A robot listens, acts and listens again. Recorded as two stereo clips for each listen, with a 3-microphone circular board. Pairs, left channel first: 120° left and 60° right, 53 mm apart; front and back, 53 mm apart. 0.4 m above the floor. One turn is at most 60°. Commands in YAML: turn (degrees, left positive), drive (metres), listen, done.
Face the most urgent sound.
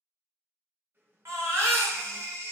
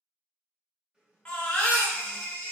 turn: -60
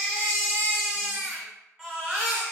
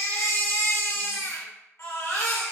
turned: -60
turn: 15
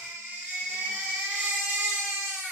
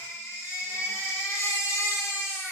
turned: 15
done: "Found it: a baby crying, straight ahead, 1 to 2 m away."